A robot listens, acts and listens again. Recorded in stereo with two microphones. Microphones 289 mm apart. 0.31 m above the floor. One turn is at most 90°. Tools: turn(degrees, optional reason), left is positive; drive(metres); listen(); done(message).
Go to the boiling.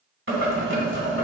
turn(degrees=-45, reason="The boiling: about 45° right or 135° right.")
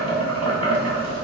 turn(degrees=-90, reason="So it is at 90° right.")
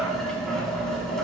drive(metres=1.0)
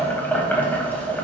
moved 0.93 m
turn(degrees=10, reason="The boiling is now 10° left.")
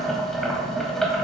drive(metres=1.0)
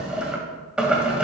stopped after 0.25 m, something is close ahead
done("Arrived at the boiling, straight ahead.")